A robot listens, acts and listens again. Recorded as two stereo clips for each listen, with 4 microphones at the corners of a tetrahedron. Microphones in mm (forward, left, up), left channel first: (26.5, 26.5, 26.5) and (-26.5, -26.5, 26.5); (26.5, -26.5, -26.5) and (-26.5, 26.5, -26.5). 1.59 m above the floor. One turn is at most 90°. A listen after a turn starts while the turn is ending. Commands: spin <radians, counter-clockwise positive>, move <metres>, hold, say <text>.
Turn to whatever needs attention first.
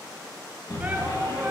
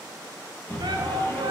spin 1.57
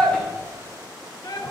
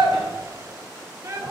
spin 1.40
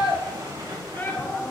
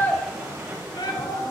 spin -0.35
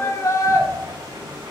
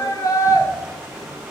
say Facing the shout.